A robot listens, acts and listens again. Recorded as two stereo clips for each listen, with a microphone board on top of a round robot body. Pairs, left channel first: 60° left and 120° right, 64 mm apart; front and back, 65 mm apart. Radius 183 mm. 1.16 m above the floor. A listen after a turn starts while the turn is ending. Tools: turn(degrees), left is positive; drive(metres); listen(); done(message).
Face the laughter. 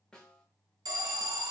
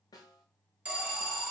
listen()
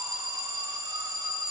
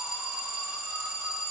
listen()
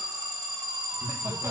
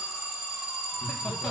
turn(degrees=-80)
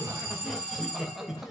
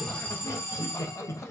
turn(degrees=-40)
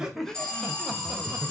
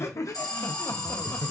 turn(degrees=-40)
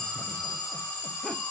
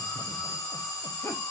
listen()
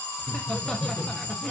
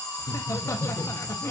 turn(degrees=-15)
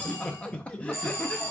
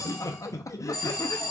done("Facing the laughter.")